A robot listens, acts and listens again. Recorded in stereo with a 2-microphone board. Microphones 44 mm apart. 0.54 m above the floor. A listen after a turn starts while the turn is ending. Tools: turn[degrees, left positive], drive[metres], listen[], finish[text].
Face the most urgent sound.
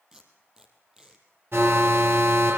Thought: The alarm: about 70° right or 110° right.
Action: turn[-70]
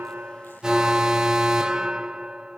Thought: So it is at 20° right.
Action: turn[-20]
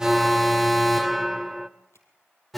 Action: finish[Facing the alarm.]